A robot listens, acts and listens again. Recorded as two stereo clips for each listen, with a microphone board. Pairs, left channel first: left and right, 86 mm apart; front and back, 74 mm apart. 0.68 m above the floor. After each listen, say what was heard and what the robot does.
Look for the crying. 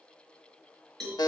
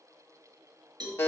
Keep listening.
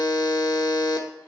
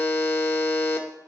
Keep listening.
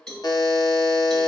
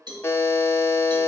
I can't make out crying, only a buzzer and a cowbell.